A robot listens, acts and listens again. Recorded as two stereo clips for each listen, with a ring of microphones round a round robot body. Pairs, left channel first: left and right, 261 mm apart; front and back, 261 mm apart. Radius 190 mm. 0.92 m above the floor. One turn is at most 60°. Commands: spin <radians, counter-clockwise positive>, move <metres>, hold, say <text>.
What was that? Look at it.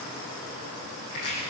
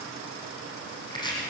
spin 1.05
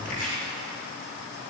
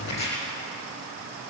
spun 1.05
spin 0.26
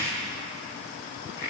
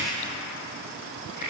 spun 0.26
say Found it: chopping, straight ahead, over 4 m away.